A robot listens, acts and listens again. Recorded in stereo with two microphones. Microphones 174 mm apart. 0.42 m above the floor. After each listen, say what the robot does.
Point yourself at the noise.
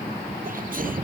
Turn 55° right.
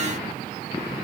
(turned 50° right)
Keep listening.
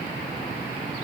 I heard a sneeze, but can't make it out now. It was about 5° right or 75° right.